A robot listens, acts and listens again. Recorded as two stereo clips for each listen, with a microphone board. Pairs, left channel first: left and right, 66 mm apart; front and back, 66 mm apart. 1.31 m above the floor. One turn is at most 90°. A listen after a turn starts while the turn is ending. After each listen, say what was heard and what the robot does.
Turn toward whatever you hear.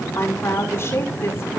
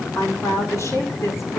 The woman speaking: 40° left. Turn 40° left.
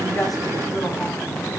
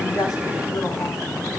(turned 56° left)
Nothing new. It was at 15° right. Turn 15° right.
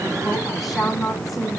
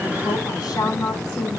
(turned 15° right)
Facing the woman speaking, over 4 m away.